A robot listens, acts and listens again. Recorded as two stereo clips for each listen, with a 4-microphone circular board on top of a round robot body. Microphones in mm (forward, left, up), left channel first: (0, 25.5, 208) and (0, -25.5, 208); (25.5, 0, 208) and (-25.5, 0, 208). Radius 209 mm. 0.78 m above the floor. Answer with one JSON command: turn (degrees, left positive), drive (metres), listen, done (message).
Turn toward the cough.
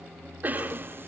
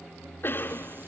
{"turn": -40}
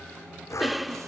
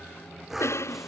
{"done": "Facing the cough."}